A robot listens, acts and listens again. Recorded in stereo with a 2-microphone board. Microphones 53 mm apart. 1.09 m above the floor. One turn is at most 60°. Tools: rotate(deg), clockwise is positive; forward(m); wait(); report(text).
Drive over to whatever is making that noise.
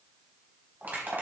rotate(35)
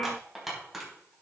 forward(1.0)
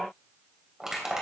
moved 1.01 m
rotate(10)
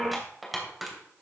forward(1.0)
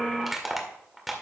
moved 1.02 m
forward(1.0)
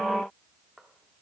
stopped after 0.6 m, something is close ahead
wait()
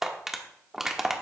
report("Arrived at the crushing, straight ahead.")